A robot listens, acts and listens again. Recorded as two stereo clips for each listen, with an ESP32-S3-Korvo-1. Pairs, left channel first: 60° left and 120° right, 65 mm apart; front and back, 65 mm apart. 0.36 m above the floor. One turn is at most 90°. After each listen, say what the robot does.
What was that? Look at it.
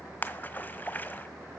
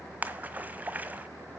Turn 90° left.
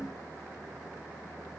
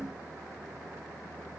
Turn 30° left.
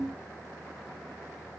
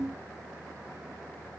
I heard a splash from this way, but can't make it out now.